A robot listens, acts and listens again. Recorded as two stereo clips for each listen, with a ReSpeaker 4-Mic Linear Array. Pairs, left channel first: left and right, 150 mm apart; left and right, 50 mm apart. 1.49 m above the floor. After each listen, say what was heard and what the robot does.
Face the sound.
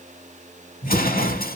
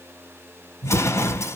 Turn 90° left.
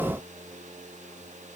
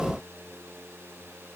Facing where the explosion came from. I can't hear it now.